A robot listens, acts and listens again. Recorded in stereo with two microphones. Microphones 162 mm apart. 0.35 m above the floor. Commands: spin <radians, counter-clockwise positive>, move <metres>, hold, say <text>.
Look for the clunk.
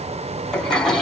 hold
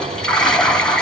hold
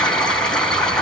say I can't make out a clunk, only a toilet flushing.